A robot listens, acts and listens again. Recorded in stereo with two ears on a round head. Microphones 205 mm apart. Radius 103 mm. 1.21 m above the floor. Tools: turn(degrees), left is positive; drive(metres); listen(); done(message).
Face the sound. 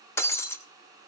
turn(degrees=30)
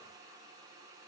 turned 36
listen()
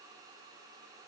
done("I heard breaking glass, but can't make it out now. It was about 25° right or 130° left.")